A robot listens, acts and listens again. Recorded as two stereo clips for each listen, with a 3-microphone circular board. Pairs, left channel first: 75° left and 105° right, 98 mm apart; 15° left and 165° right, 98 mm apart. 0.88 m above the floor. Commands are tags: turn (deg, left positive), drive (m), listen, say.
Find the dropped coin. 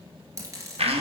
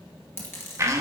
<turn deg="-45"/>
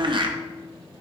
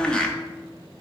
<say>I heard a dropped coin from this way, but can't make it out now.</say>